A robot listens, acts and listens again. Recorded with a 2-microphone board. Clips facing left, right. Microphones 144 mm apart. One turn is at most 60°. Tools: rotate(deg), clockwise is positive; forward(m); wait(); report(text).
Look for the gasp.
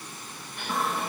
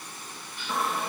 rotate(-60)
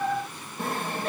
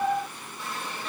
wait()
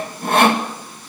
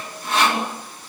report("I heard a gasp, but can't make it out now. It was about 5° left or 55° left.")